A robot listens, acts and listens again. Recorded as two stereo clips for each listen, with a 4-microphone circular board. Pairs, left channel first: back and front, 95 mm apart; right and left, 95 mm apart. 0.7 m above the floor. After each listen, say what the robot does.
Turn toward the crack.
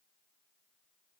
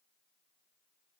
Keep listening.
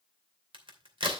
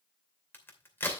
Turn 25° right.
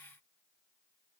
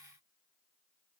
Facing where the crack came from. I can't hear it now.